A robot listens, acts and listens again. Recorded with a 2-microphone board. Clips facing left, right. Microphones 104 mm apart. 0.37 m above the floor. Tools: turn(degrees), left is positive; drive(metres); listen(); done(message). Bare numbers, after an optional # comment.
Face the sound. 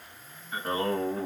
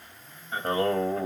# The singing: about 40° right or 140° right.
turn(-40)
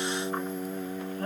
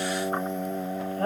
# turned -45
# So it is at 85° right.
turn(-85)
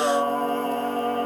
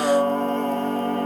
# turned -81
done("Found it: singing, straight ahead.")